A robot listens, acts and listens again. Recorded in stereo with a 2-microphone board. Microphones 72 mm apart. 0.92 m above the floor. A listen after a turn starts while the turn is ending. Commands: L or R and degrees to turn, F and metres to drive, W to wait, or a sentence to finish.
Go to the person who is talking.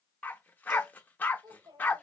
R90
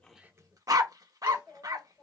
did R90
L10
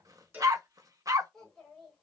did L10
F1.0
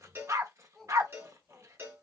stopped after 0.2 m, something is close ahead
Something is in my way. I am facing the child speaking but have not reached it.